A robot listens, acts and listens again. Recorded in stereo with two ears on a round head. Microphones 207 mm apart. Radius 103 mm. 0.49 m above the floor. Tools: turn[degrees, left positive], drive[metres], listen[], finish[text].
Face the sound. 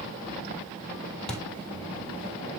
Action: turn[30]
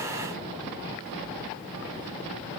Action: listen[]
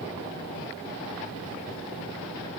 Action: finish[I heard a thud, but can't make it out now. It was about 25° right or 145° left.]